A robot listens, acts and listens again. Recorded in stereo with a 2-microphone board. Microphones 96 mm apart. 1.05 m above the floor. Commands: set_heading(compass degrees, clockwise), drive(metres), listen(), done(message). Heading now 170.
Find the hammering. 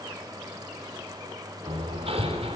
set_heading(260)
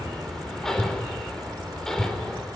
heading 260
done("Facing the hammering.")